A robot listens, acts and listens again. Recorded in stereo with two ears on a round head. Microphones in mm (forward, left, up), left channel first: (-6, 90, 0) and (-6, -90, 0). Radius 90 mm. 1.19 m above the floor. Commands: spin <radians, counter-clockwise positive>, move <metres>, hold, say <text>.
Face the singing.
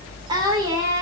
spin -0.26
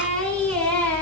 spin 0.52
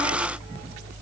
hold
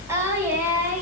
spin -0.17
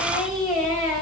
say Facing the singing, 2 to 4 m away.